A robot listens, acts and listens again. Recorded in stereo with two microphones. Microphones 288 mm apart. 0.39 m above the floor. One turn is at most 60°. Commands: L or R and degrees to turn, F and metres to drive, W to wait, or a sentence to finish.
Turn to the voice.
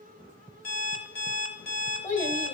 L25
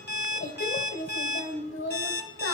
L60
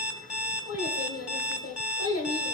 L60
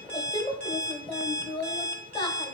L20
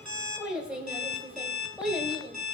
Found it: a child speaking, straight ahead.